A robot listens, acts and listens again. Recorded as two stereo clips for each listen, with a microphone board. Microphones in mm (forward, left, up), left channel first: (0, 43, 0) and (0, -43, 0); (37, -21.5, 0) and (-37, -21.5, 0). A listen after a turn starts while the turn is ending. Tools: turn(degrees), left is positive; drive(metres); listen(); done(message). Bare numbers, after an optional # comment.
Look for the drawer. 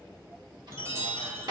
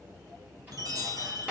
# The drawer: 115° right.
turn(-115)
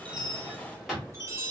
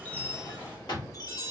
done("Found it: a drawer, straight ahead.")